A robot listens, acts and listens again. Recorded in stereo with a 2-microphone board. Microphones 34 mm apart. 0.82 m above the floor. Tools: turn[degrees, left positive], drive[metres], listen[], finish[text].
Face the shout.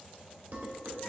Action: listen[]
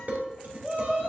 Thought: The shout: about 30° right or 150° right.
Action: turn[-30]
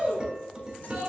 Thought: So it is at 120° right.
Action: turn[-120]
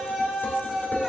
Thought: The shout is now 25° right.
Action: turn[-25]
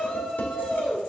Action: finish[Facing the shout, 2 to 4 m away.]